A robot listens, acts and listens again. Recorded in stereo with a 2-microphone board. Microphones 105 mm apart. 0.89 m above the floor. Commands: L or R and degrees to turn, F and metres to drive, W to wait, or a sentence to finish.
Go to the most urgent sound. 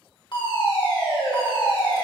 L50
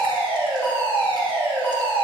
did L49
L20
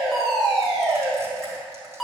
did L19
F1.0
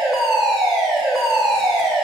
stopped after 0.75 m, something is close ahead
Arrived at the fire alarm, straight ahead.